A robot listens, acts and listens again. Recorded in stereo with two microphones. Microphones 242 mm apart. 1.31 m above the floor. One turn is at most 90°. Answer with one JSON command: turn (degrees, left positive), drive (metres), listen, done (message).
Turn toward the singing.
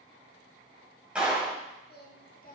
{"turn": 35}
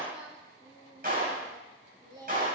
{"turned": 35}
{"turn": -15}
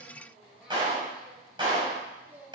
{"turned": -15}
{"done": "Facing the singing, 2 to 4 m away."}